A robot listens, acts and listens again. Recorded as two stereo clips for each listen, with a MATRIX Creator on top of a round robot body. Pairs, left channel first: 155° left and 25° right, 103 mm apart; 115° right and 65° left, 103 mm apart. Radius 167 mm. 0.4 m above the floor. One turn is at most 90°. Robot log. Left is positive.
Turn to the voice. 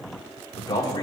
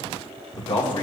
note: The man speaking: 150° right.
cmd yaw -90
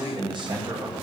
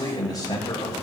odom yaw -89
note: The man speaking is now 60° right.
cmd yaw -60
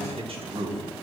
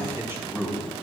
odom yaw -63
end: Facing the man speaking.